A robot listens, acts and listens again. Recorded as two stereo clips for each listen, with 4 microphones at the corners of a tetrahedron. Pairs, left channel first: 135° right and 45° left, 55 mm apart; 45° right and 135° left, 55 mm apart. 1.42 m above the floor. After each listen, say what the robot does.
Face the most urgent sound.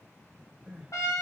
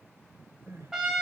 Turn 120° left.
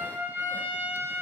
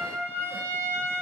Keep listening.
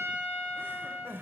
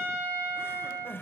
Found it: crying, straight ahead.